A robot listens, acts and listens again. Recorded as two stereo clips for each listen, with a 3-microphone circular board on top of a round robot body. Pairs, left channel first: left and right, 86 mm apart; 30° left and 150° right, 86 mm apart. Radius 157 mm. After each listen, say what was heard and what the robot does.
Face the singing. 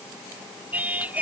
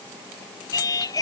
The singing: 15° right. Turn 15° right.
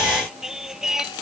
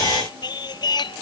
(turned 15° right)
Facing the singing.